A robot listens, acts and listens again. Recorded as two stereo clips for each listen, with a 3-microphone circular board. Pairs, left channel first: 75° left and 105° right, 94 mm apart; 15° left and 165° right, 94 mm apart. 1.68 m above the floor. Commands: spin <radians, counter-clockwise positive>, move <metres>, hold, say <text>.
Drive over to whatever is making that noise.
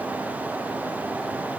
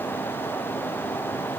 hold
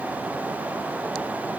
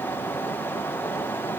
hold
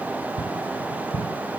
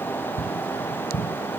move 1.0
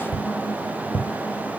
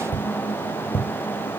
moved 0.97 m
spin 0.17
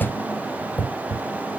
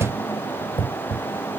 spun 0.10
move 1.0
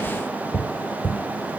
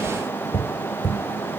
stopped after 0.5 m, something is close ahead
say I am next to the tapping.